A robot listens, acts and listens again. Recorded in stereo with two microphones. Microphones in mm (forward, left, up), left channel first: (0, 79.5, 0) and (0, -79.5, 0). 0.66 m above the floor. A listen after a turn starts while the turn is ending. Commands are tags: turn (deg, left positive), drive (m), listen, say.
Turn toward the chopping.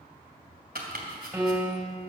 <turn deg="-90"/>
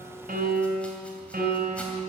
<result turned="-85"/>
<listen/>
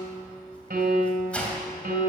<turn deg="10"/>
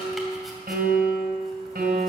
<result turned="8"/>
<listen/>
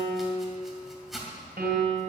<say>Facing the chopping.</say>